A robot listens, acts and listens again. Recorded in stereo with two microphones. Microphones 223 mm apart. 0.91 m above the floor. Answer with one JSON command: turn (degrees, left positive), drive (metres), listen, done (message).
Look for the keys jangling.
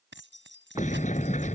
{"turn": -55}
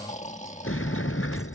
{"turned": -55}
{"listen": true}
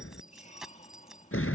{"done": "Found it: keys jangling, straight ahead."}